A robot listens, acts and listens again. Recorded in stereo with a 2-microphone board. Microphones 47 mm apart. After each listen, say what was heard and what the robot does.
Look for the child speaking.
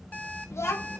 The child speaking: about 70° left or 110° left. Turn 70° left.
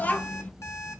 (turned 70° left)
So it is at 35° left. Turn 35° left.
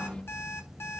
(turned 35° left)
The child speaking is now 20° left. Turn 20° left.
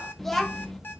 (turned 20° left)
Facing the child speaking, under 1 m away.